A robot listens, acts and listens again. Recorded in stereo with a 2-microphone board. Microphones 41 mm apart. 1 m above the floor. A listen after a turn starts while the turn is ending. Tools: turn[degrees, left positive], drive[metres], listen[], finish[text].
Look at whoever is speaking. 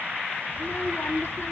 Action: turn[90]
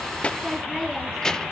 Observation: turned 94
Thought: So it is at 15° left.
Action: turn[15]
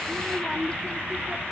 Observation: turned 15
Thought: The child speaking is now 25° left.
Action: turn[25]
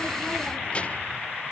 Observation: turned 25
Thought: The child speaking is now 30° left.
Action: turn[30]
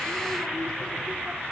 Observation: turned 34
Action: listen[]
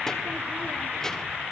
Thought: The child speaking is now 15° left.
Action: turn[15]
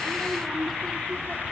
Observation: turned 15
Action: finish[Found it: a child speaking, straight ahead, 1 to 2 m away.]